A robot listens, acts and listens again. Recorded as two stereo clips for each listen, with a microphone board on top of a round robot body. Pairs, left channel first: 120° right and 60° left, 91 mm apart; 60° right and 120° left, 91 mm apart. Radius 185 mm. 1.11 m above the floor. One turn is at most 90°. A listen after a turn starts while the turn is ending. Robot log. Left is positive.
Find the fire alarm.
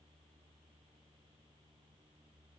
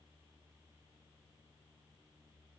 cmd idle
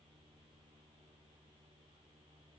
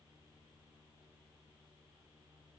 cmd idle
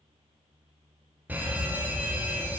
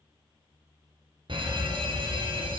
note: The fire alarm: 130° left.
cmd yaw +90
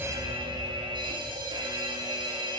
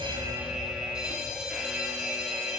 note: The fire alarm is now 40° left.
cmd yaw +40
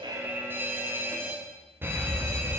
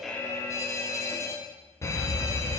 end: Found it: a fire alarm, straight ahead.